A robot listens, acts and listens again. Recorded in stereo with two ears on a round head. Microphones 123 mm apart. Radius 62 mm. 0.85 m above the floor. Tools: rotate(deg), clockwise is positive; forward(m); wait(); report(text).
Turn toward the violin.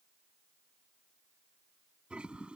wait()
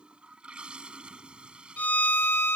rotate(-30)
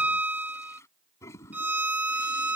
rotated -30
rotate(15)
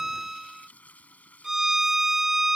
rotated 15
report("Found it: a violin, straight ahead.")